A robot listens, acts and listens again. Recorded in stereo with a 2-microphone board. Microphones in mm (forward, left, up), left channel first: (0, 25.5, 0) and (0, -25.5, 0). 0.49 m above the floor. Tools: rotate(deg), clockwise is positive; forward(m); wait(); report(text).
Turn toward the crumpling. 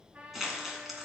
rotate(30)
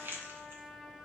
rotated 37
rotate(135)
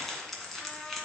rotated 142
report("Facing the crumpling.")